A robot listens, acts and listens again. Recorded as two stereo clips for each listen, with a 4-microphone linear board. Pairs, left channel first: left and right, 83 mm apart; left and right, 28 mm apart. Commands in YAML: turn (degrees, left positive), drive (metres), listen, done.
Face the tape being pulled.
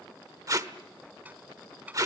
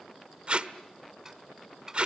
turn: -45
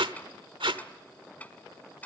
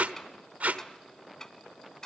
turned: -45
turn: -90
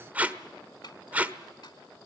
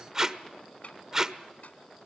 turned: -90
turn: -20
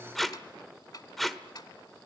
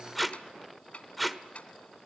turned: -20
done: "Found it: tape being pulled, straight ahead."